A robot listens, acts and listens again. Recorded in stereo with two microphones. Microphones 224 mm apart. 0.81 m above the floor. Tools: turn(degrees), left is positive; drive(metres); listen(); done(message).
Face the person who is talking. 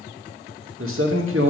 turn(degrees=-75)
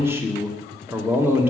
turn(degrees=-10)
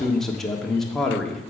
done("Found it: a man speaking, straight ahead.")